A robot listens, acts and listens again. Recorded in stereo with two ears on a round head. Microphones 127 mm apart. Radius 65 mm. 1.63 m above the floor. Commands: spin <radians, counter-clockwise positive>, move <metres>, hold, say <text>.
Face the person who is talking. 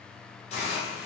hold
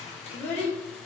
spin 0.52
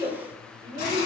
spin -0.35
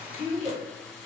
say Facing the child speaking.